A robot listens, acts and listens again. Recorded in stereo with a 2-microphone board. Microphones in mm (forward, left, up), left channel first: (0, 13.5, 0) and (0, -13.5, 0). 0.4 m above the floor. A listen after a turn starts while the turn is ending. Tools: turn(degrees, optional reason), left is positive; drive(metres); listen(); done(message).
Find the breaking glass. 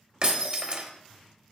turn(degrees=-40, reason="The breaking glass: about 40° right or 140° right.")
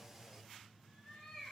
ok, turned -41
listen()
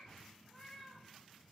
done("I heard breaking glass, but can't make it out now. It was about 5° left or 100° right.")